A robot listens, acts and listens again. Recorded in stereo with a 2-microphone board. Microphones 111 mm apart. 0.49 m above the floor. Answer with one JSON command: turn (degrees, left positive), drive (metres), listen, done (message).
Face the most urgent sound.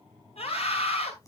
{"turn": 70}
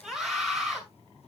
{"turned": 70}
{"done": "Facing the scream."}